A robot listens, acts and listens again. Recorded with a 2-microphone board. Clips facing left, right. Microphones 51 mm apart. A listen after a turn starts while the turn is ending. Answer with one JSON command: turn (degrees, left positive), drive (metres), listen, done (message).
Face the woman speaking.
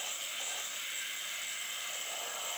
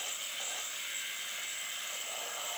{"listen": true}
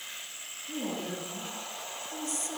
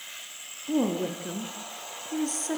{"turn": -50}
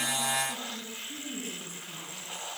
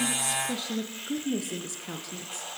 {"turn": -80}
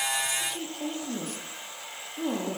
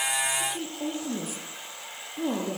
{"done": "Facing the woman speaking, over 4 m away."}